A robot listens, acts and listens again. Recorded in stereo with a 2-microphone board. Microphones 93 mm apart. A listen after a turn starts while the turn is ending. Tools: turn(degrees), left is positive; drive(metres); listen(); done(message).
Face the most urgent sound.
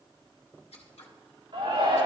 turn(degrees=-65)
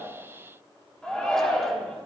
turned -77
turn(degrees=10)
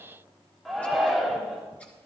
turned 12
done("Facing the shout, 2 to 4 m away.")